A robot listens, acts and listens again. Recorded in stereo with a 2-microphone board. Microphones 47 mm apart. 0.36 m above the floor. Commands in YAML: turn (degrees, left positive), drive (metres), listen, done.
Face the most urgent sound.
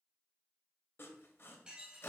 listen: true
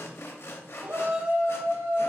turn: -45
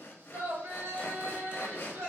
turn: -80
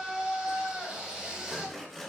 turn: -25
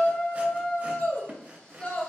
turn: 20
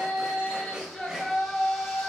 done: "Found it: a shout, straight ahead."